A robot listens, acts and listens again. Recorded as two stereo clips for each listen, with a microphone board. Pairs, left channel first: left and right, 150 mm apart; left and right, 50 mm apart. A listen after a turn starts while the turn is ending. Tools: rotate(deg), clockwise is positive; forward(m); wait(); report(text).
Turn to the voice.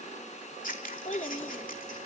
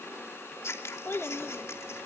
rotate(-50)
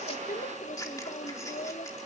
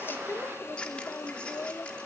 rotate(-75)
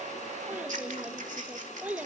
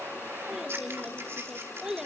rotate(10)
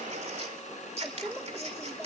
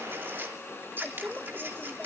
report("Facing the child speaking, 1 to 2 m away.")